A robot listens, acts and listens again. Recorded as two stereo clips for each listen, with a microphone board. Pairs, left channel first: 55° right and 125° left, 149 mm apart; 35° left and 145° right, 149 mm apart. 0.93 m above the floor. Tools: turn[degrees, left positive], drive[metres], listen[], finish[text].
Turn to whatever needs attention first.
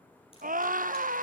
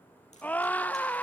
Thought: The scream: 115° left.
Action: turn[115]
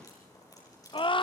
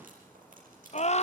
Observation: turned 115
Action: finish[Facing the scream.]